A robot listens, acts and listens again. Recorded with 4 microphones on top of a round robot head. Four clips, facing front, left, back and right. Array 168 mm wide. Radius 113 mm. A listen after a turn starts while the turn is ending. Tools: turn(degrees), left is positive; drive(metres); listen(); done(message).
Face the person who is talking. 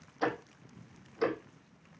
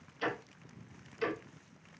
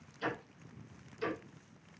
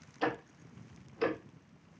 listen()
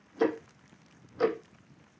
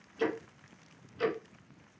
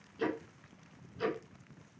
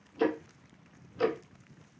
listen()
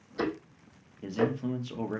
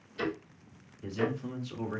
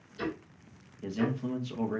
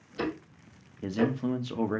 turn(degrees=-80)
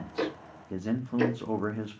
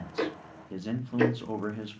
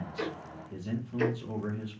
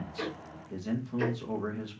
turn(degrees=15)
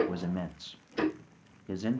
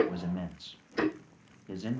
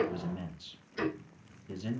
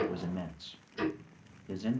done("Found it: a man speaking, straight ahead, under 1 m away.")